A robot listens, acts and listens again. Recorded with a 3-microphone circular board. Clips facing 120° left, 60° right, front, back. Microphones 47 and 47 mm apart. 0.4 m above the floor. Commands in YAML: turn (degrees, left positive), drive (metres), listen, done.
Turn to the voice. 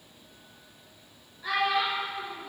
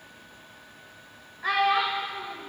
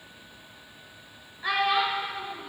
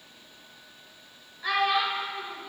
turn: -80
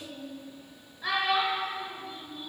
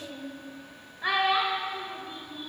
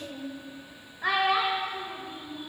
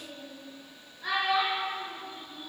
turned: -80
done: "Facing the child speaking."